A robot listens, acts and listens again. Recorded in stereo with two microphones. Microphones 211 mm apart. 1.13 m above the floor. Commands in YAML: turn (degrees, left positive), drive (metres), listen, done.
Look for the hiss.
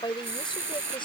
turn: -70
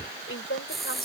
done: "Facing the hiss."